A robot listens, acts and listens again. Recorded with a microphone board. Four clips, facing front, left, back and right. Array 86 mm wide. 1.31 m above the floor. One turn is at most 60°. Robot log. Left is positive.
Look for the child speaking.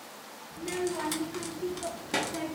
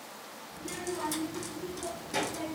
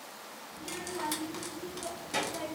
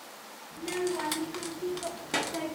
note: The child speaking: 60° right.
cmd yaw -60
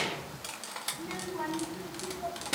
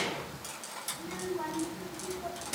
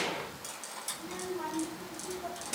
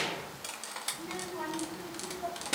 note: The child speaking is now 50° right.
cmd yaw -50
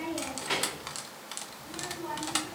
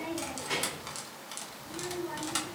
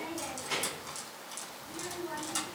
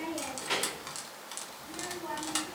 note: The child speaking is now 30° right.
cmd yaw -30
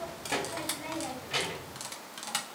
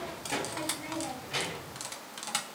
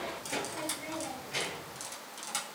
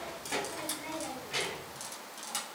note: The child speaking is now 15° left.
cmd yaw +15
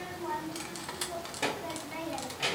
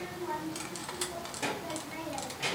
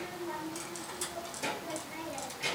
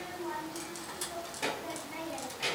end: Found it: a child speaking, straight ahead.